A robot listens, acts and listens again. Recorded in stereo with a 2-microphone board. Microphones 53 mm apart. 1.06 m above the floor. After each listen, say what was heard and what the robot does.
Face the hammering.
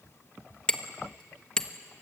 The hammering: about 15° left or 165° left. Turn 15° left.
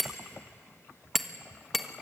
Facing the hammering, 1 to 2 m away.